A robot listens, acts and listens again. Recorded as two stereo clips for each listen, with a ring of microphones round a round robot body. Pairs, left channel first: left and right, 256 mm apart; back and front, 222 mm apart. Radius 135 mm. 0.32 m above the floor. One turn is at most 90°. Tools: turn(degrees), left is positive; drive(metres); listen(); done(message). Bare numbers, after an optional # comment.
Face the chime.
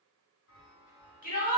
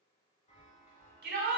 # The chime: 125° left.
turn(90)
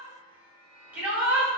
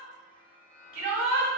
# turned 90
# The chime is now 80° left.
turn(80)
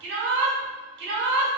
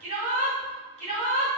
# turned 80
listen()
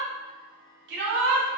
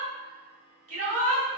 listen()
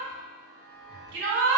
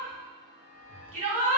# The chime is now 30° left.
turn(30)
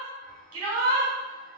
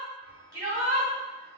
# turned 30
# The chime is now 15° left.
turn(15)
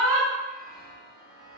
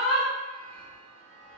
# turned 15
done("Facing the chime, 1 to 2 m away.")